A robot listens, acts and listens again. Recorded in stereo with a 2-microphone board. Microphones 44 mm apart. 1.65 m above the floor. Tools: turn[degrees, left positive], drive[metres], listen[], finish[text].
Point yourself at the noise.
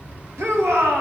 Action: turn[-90]
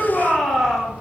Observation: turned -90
Action: finish[Found it: a shout, straight ahead, 2 to 4 m away.]